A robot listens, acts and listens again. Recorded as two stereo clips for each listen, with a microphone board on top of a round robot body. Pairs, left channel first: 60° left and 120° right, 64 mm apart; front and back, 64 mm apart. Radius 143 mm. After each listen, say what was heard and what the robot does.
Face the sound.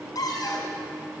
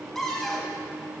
The cupboard door: 85° left. Turn 85° left.
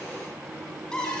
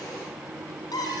The cupboard door is now 20° right. Turn 20° right.
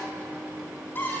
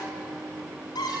Facing the cupboard door, 2 to 4 m away.